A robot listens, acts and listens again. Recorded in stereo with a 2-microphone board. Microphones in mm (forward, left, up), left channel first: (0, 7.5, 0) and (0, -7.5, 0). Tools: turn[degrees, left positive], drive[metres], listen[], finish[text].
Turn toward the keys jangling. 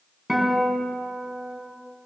Action: listen[]
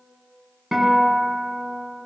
Action: listen[]
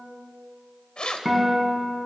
Thought: The keys jangling: about 75° left or 105° left.
Action: turn[75]
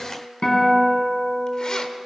Action: listen[]
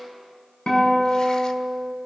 Action: listen[]
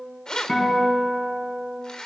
Thought: So it is at 55° left.
Action: turn[55]
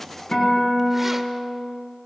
Action: listen[]
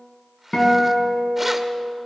Action: listen[]
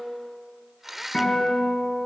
Action: finish[Found it: keys jangling, straight ahead, 1 to 2 m away.]